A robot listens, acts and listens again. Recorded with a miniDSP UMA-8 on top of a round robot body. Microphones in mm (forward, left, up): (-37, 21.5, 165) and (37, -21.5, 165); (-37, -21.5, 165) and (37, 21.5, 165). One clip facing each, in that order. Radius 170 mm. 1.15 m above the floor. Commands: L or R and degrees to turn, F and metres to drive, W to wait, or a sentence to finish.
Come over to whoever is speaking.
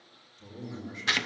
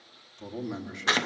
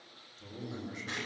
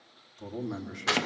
F1.0
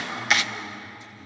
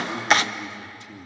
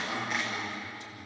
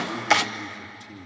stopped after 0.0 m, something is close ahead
R10
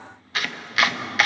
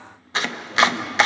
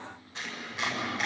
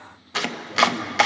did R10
W
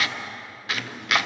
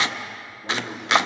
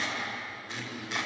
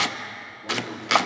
W
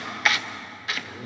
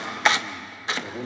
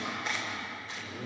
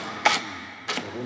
Something is in my way. I am facing the man speaking but have not reached it.